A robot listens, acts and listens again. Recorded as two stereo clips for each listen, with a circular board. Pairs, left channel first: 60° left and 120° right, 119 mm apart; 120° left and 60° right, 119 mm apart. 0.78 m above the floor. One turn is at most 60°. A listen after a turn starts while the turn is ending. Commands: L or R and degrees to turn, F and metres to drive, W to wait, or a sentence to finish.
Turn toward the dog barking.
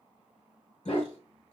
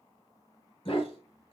L60
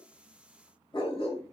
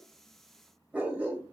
L20
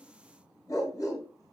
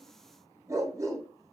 Facing the dog barking, 1 to 2 m away.